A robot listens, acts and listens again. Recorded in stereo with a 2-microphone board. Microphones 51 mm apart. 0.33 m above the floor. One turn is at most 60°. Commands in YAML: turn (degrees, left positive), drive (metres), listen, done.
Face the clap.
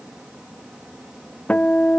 listen: true
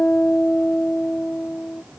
listen: true
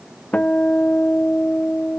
done: "I can't make out a clap to turn to."